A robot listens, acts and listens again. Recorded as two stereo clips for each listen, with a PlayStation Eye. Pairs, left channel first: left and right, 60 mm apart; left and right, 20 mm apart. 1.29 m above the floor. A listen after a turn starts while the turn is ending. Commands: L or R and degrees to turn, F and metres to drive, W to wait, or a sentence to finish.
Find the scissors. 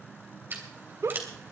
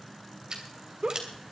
R35
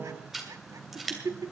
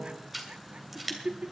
Found it: scissors, straight ahead.